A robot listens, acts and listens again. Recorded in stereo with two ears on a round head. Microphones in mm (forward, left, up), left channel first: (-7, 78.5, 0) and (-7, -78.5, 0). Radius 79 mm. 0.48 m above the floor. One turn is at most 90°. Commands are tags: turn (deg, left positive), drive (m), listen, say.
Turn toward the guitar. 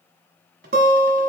<turn deg="-55"/>
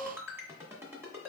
<turn deg="-70"/>
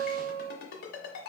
<say>Facing the guitar.</say>